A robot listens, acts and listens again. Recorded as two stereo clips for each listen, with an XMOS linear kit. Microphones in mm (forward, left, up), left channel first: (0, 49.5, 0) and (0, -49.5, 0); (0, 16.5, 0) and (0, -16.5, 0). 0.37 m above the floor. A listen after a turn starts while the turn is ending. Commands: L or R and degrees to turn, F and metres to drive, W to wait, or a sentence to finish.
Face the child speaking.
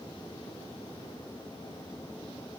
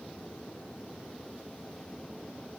W
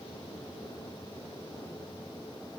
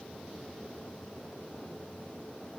W
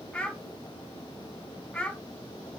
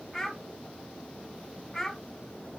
L30
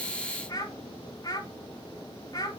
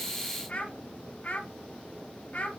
L140
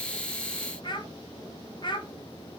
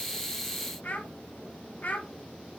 L55
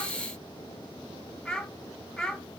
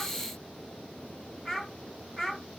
L10
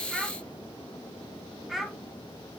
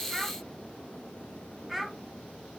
Found it: a child speaking, straight ahead, 1 to 2 m away.